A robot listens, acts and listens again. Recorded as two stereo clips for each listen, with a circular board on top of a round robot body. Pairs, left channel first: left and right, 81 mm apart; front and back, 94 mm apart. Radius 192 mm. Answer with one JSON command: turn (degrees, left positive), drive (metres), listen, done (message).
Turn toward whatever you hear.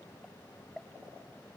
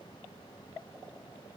{"listen": true}
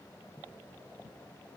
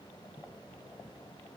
{"listen": true}
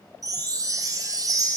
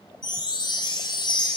{"turn": -45}
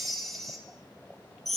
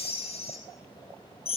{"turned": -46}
{"done": "Found it: a chime, straight ahead, 1 to 2 m away."}